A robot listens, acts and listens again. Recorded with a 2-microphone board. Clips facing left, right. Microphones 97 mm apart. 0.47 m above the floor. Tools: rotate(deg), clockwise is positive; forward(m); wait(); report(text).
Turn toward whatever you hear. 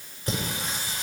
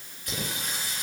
rotate(-30)
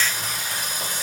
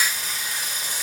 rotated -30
rotate(-130)
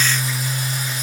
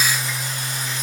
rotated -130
rotate(-10)
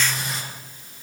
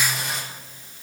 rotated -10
report("Facing the singing, over 4 m away.")